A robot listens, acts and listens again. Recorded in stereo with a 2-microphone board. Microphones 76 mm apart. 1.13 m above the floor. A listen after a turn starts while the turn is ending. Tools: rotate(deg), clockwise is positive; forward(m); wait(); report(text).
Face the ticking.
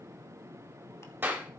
wait()
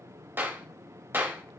wait()
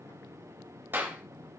report("I can't make out ticking, only a clap.")